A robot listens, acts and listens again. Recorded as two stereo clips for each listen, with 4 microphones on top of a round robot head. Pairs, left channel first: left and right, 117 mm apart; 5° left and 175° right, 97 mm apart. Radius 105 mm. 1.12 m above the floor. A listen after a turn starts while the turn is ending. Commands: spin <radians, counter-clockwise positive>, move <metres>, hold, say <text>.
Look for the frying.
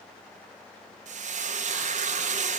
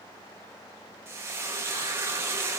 spin -1.83
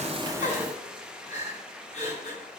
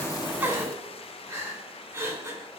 say Found it: frying, straight ahead, 1 to 2 m away.